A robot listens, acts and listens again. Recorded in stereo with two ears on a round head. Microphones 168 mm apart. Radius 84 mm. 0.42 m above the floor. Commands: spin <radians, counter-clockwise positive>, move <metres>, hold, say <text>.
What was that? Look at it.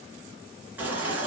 spin -0.52
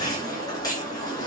spin 0.35
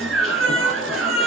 say Found it: a baby crying, straight ahead.